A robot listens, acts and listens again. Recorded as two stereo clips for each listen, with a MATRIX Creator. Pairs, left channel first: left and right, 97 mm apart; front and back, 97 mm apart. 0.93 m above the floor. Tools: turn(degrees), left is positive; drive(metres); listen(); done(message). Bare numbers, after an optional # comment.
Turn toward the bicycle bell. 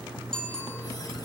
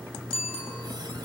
done("Facing the bicycle bell, over 4 m away.")